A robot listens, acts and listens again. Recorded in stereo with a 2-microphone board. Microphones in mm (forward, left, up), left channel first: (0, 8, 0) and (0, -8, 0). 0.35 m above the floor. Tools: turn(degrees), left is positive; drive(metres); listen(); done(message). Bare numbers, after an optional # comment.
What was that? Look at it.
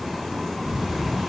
# The breathing: about 55° right or 125° right.
turn(-55)
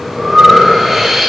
done("Facing the breathing, over 4 m away.")